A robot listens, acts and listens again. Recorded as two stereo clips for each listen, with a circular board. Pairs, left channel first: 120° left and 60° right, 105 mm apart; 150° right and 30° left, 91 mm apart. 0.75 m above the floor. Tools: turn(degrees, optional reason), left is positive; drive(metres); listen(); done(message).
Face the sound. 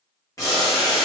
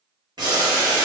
turn(degrees=65, reason="The boiling: 65° left.")
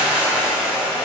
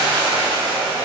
turn(degrees=15, reason="The boiling is now 15° left.")
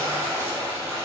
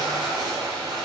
done("Found it: boiling, straight ahead, 1 to 2 m away.")